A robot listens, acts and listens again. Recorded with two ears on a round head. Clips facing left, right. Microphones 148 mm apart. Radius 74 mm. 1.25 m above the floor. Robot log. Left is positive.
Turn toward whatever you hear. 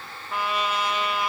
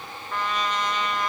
cmd yaw +30
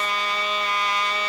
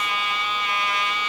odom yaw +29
note: So it is at 145° left.
cmd yaw +145
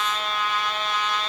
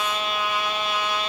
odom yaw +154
note: The trumpet is now 10° right.
cmd yaw -10
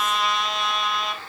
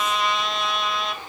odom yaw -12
end: Found it: a trumpet, straight ahead, 1 to 2 m away.